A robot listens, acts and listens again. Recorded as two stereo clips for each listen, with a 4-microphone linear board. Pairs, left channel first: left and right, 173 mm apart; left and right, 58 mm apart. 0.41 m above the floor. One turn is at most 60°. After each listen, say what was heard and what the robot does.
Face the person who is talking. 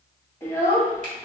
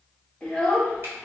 Turn 30° left.
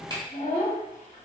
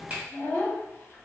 So it is at 135° left. Turn 60° left.
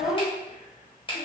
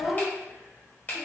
The child speaking is now 65° left. Turn 60° left.
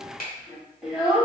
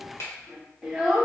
Facing the child speaking.